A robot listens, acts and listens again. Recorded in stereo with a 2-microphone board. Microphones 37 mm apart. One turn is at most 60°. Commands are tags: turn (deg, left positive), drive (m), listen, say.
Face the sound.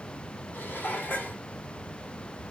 <turn deg="60"/>
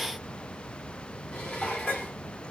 <turn deg="40"/>
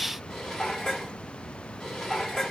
<turn deg="10"/>
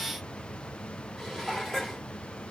<say>Facing the dishes clattering, 2 to 4 m away.</say>